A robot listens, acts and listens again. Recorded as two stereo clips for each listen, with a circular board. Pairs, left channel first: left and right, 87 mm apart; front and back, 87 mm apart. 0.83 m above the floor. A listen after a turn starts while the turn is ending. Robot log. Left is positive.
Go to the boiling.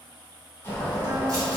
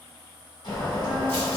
note: The boiling: 30° left.
cmd yaw +30
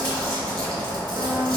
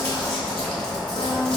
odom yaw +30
note: The boiling is now 15° left.
cmd yaw +15
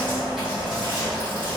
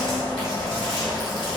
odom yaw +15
cmd fwd 1.0
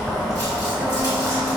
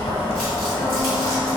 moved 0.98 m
cmd fwd 1.0
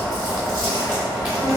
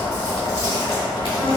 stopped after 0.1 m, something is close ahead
note: The boiling is now 10° right.
cmd yaw -10
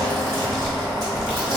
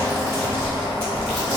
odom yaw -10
end: I am next to the boiling.